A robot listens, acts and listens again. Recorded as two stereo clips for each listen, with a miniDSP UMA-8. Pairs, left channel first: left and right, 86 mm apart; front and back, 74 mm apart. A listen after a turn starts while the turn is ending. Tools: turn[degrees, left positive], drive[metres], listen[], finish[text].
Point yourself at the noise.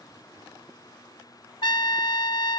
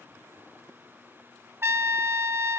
Thought: The trumpet: 125° left.
Action: turn[125]
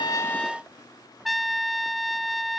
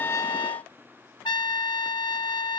Action: finish[Found it: a trumpet, straight ahead.]